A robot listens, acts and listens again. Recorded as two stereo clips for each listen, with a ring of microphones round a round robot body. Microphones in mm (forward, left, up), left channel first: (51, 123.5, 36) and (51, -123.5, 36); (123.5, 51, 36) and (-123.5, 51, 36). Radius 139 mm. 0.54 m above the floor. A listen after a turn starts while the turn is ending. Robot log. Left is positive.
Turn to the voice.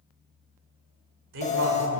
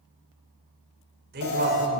note: The man speaking: 130° right.
cmd yaw -130
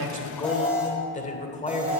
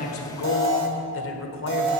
note: The man speaking is now 30° left.
cmd yaw +30
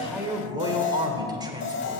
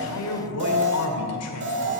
note: The man speaking is now 15° right.
cmd yaw -15
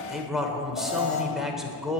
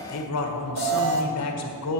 end: Found it: a man speaking, straight ahead.